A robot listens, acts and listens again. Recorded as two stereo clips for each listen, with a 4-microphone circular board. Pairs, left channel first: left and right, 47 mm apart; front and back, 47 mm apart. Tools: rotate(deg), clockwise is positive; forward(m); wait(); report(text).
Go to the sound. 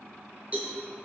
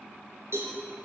rotate(150)
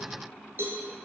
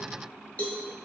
rotate(55)
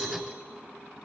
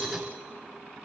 rotate(-10)
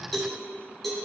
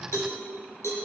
forward(1.0)
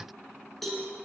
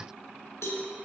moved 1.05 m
forward(1.0)
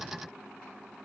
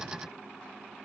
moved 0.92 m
wait()
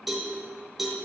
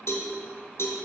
forward(1.0)
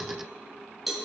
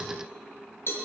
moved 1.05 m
forward(1.0)
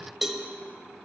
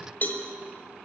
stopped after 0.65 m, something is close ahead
report("I am next to the cowbell.")